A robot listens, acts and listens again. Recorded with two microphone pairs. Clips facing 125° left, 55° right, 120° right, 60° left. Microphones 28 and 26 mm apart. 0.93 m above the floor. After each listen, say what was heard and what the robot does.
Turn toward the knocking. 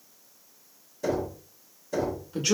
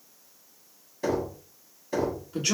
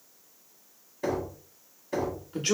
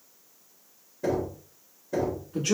The knocking: 115° right. Turn 115° right.
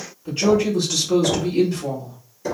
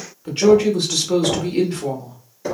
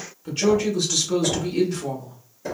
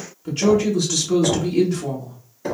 The knocking is now 10° left. Turn 10° left.
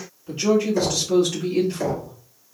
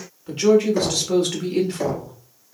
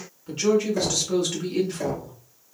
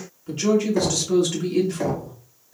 Found it: knocking, straight ahead, 1 to 2 m away.